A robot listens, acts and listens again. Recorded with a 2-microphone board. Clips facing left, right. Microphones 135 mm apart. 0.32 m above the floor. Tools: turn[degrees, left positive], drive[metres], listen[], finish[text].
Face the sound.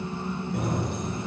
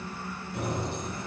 Thought: The keys jangling: about 60° left or 120° left.
Action: turn[60]
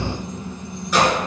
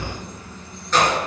Thought: So it is at 10° left.
Action: turn[10]
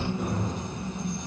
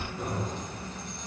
Action: listen[]
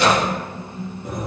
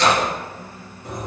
Thought: The keys jangling is now 10° left.
Action: turn[10]
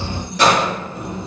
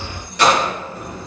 Action: finish[Facing the keys jangling.]